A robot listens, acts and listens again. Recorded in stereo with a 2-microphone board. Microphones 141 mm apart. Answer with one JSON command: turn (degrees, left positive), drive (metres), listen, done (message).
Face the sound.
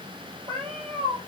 {"turn": -40}
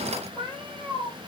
{"turn": 15}
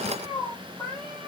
{"turn": 10}
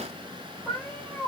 {"turn": 10}
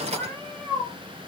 {"done": "Facing the cat meowing."}